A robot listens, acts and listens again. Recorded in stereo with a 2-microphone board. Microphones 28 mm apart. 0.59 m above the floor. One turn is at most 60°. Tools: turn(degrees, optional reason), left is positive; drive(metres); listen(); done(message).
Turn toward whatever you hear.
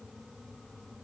listen()
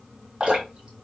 turn(degrees=-40, reason="The dripping: about 40° right or 140° right.")
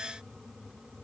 listen()
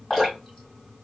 done("Found it: dripping, straight ahead.")